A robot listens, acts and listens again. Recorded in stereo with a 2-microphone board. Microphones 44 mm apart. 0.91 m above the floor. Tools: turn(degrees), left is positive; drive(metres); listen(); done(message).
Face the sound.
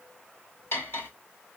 turn(degrees=90)
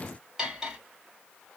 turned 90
turn(degrees=-15)
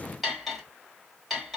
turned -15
done("Found it: cutlery clinking, straight ahead.")